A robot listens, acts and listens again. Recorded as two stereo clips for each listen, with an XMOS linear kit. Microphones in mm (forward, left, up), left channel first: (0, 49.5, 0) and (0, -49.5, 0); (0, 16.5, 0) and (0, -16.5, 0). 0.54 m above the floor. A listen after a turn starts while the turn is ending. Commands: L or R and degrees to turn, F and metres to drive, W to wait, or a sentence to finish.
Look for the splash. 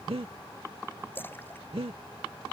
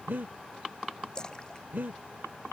L20
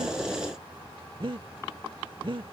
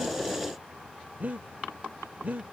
W
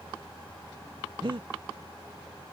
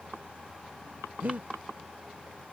I heard a splash, but can't make it out now. It was about straight ahead or 140° left.